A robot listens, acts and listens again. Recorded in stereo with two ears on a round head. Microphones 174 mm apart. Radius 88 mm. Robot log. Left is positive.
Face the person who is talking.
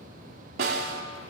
cmd idle
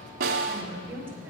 cmd yaw -30
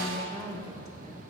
note: So it is at 15° left.
cmd yaw +15
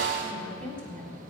end: Found it: a woman speaking, straight ahead.